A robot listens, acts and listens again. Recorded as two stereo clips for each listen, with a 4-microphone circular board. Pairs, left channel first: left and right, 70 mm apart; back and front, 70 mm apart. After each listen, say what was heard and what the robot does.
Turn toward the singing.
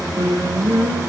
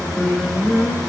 The singing: 85° right. Turn 85° right.
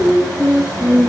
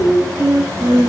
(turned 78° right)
The singing is now 10° left. Turn 10° left.
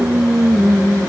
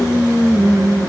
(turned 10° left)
The singing is now 10° left. Turn 10° left.
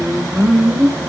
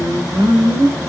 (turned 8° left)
The singing is now 10° left. Turn 10° left.
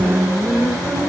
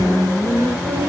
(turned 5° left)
Found it: singing, straight ahead.